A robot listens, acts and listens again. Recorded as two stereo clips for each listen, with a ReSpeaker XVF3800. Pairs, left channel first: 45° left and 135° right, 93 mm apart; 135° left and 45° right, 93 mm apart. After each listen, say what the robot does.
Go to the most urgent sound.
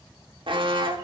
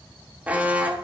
Turn 120° right.
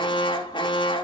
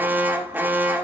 Turn 25° left.
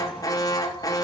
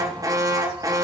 Drive 1.0 m forward.
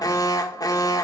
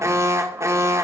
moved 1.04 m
Drive 1.0 m forward.
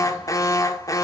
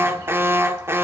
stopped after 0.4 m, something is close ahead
Turn 10° left.
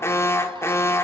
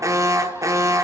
I am next to the alarm.